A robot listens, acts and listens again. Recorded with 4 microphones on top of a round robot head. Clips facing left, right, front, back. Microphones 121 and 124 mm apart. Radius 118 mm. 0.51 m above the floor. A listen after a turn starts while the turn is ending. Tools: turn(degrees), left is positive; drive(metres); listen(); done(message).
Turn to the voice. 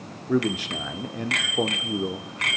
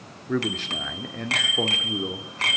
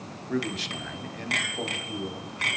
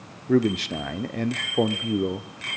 turn(degrees=165)
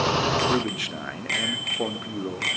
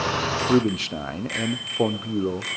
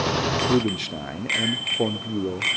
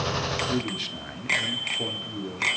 turn(degrees=-35)
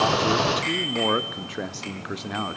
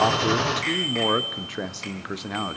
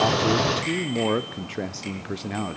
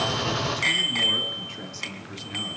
done("Facing the man speaking, 1 to 2 m away.")